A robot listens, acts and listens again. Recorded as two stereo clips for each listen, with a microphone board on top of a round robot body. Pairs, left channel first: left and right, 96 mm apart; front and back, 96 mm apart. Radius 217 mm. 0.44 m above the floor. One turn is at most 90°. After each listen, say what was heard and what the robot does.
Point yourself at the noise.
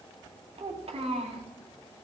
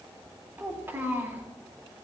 The child speaking: 110° right. Turn 90° right.
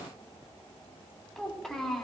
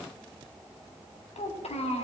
Found it: a child speaking, straight ahead, 2 to 4 m away.